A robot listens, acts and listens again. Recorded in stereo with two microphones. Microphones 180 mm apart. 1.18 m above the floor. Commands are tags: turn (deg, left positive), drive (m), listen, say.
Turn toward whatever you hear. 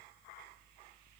<listen/>
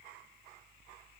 <listen/>
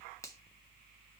<turn deg="15"/>
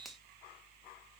<listen/>
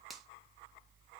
<say>Found it: a finger snap, straight ahead, 1 to 2 m away.</say>